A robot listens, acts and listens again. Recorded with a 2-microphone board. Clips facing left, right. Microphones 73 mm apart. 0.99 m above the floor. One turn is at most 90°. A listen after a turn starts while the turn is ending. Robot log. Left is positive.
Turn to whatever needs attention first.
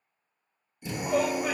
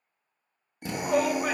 note: The shout: about 55° right or 125° right.
cmd yaw -55
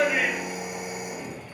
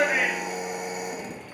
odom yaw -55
cmd idle
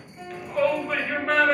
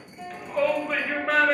end: Found it: a shout, straight ahead.